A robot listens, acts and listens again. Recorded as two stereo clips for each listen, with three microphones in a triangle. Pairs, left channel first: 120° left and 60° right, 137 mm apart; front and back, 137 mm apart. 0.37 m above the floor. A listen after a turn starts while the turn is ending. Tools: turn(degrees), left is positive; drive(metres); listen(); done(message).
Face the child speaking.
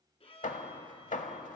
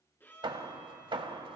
listen()
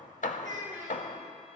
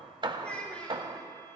turn(degrees=-80)
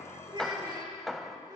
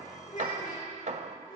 done("Facing the child speaking.")